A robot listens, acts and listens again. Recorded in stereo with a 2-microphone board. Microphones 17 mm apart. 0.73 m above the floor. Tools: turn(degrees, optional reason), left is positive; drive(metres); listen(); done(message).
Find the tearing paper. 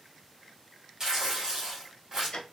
turn(degrees=-30, reason="The tearing paper: about 30° right or 150° right.")
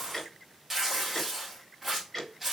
done("Found it: tearing paper, straight ahead, 2 to 4 m away.")